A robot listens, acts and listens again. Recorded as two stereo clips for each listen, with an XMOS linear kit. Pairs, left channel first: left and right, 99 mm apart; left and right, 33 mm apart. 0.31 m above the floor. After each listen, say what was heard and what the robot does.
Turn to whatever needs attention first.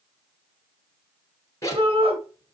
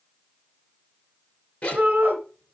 The shout: about 55° right or 125° right. Turn 55° right.
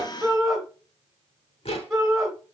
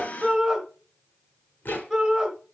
Facing the shout, 2 to 4 m away.